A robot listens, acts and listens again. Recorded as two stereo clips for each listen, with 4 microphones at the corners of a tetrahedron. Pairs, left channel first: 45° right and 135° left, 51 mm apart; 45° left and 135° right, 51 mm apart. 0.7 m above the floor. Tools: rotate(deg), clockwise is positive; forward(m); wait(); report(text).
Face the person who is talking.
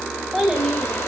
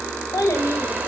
rotate(-50)
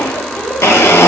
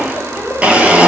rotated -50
wait()
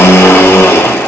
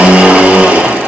wait()
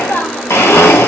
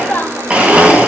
report("Found it: a child speaking, straight ahead, 2 to 4 m away.")